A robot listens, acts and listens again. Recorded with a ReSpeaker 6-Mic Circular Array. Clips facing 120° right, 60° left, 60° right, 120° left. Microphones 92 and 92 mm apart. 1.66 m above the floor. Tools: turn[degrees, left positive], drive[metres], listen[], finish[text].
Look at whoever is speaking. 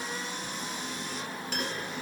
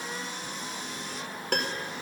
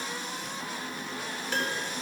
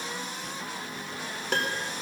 Action: listen[]
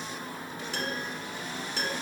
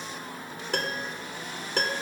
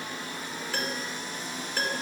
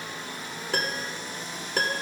Action: listen[]
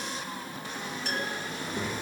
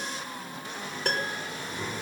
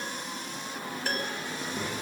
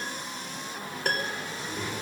Thought: The child speaking: 130° right.
Action: turn[-130]
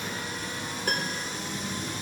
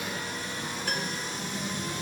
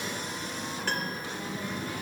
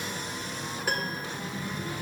Thought: The child speaking is now 20° right.
Action: turn[-20]
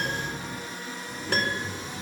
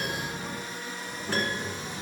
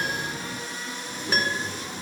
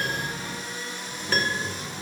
Action: finish[Facing the child speaking, over 4 m away.]